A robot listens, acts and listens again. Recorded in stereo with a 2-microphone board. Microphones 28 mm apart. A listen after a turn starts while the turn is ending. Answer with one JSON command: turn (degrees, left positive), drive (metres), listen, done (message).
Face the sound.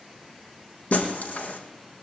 {"turn": 75}
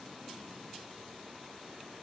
{"listen": true}
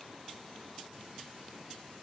{"done": "I heard breaking glass, but can't make it out now. It was about straight ahead or 30° left."}